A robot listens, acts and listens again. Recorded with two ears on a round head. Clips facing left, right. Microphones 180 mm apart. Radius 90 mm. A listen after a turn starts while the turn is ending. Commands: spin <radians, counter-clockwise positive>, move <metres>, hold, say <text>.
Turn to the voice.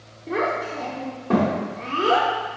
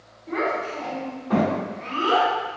spin 1.22
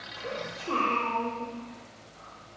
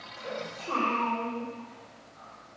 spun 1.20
spin 0.61
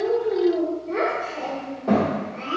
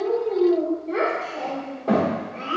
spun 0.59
say Facing the child speaking.